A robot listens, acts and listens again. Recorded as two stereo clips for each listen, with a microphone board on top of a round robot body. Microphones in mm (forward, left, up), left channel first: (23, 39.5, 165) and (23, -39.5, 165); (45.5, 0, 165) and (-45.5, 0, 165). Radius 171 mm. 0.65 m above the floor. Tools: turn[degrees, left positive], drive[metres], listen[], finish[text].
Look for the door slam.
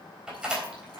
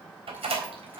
Thought: The door slam: 170° right.
Action: turn[-170]
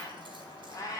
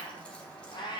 Action: finish[I heard a door slam from this way, but can't make it out now.]